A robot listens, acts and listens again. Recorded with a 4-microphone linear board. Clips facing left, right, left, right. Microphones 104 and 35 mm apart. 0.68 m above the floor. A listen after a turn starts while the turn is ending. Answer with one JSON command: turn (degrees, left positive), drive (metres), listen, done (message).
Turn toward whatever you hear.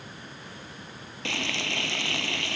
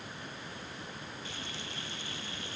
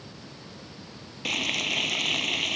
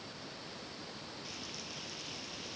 {"turn": 90}
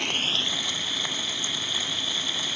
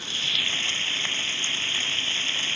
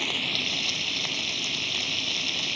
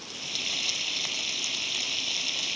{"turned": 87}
{"turn": 15}
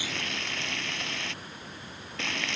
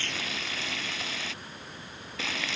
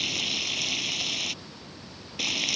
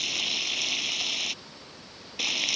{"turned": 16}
{"done": "Found it: frying, straight ahead."}